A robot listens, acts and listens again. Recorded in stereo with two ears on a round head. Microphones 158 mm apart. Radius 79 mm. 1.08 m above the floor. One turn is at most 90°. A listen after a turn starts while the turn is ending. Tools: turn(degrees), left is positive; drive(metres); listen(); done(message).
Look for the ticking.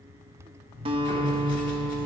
turn(degrees=20)
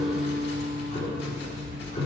turn(degrees=90)
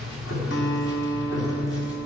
turn(degrees=55)
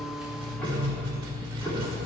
done("Found it: ticking, straight ahead.")